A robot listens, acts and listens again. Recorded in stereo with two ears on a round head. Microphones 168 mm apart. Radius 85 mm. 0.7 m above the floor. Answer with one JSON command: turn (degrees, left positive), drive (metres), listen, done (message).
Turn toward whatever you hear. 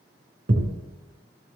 {"turn": -35}
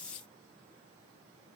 {"listen": true}
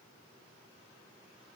{"done": "I heard a thud, but can't make it out now. It was about straight ahead or 110° right."}